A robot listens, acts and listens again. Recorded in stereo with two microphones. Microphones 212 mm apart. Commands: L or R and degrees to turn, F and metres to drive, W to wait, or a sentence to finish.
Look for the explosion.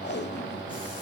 W
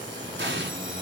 R60
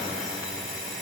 W
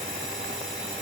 I heard an explosion, but can't make it out now. It was about straight ahead or 60° right.